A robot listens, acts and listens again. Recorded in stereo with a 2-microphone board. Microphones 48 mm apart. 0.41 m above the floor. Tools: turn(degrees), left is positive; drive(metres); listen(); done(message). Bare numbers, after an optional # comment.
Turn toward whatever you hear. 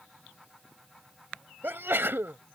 # The sneeze: about 55° right or 125° right.
turn(-55)
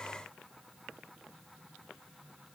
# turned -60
listen()
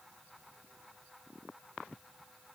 done("I heard a sneeze, but can't make it out now. It was about 5° left or 65° right.")